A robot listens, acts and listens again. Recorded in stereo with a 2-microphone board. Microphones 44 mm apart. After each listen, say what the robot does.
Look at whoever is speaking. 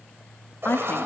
Turn 50° left.
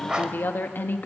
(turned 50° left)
Turn 65° left.
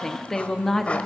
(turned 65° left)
Turn 15° left.
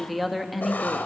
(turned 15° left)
Found it: a woman speaking, straight ahead.